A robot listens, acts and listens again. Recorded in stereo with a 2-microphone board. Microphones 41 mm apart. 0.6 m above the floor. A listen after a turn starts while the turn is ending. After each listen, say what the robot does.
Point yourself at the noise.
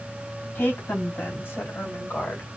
Turn 75° left.
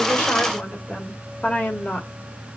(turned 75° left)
Turn 40° left.
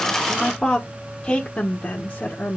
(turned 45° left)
Turn 40° left.
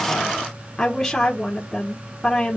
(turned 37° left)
Turn 10° left.
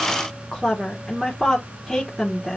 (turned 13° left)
Facing the woman speaking.